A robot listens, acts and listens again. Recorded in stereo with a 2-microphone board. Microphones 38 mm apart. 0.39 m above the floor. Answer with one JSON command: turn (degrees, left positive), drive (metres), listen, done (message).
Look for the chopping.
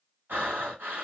{"listen": true}
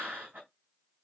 {"listen": true}
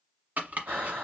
{"turn": -50}
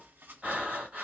{"listen": true}
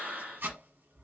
{"turn": -80}
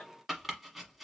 {"done": "Facing the chopping."}